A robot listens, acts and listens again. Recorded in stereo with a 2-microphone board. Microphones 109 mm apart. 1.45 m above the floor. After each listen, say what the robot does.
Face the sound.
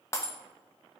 Turn 25° left.
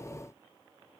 Keep listening.
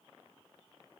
I heard breaking glass, but can't make it out now. It was about straight ahead or 130° left.